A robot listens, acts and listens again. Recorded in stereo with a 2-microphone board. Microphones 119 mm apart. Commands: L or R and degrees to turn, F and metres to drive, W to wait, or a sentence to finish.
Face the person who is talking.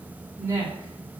R25
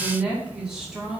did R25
Facing the woman speaking.